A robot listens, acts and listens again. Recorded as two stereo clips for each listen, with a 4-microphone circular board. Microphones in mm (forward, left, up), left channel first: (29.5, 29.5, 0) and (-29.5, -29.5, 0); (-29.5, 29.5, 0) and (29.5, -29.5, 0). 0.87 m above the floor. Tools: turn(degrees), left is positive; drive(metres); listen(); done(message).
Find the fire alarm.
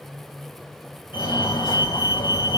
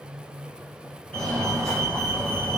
turn(degrees=50)
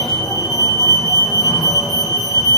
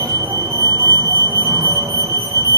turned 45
done("Facing the fire alarm.")